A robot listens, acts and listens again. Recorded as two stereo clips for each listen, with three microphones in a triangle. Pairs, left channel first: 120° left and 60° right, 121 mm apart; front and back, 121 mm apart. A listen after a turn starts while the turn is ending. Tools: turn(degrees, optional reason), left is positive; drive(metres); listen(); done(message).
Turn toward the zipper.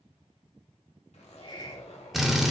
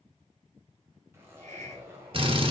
turn(degrees=110, reason="The zipper: 110° left.")
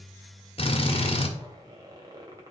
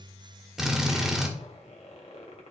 done("Facing the zipper.")